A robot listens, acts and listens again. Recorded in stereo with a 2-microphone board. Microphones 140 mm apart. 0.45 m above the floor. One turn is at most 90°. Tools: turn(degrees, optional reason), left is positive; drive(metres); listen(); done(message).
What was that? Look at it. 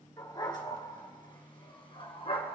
turn(degrees=45, reason="The dog barking: about 45° left or 135° left.")
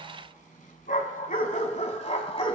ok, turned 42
turn(degrees=45, reason="The dog barking: about 45° left or 135° left.")
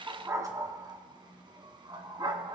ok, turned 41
turn(degrees=-35, reason="So it is at 35° right.")
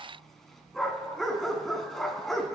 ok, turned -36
done("Found it: a dog barking, straight ahead.")